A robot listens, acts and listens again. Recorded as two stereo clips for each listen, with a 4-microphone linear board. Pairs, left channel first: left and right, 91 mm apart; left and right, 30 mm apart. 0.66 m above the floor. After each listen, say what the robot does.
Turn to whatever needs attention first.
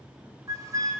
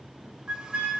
Keep listening.
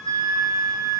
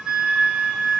Keep listening.
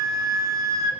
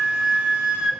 I can't make out anything urgent, only a flute.